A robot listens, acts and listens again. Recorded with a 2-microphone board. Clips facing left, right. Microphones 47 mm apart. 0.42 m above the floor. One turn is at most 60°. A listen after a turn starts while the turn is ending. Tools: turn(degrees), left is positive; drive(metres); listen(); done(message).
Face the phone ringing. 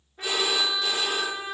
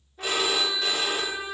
turn(degrees=-55)
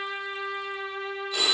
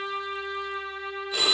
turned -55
done("Facing the phone ringing.")